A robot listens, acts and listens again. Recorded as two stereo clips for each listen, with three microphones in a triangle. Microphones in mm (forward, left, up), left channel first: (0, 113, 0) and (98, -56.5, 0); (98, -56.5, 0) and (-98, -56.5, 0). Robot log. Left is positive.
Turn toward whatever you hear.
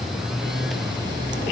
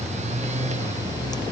cmd idle
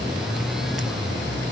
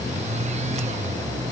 cmd idle
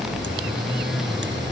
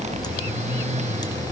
end: I can't make out anything.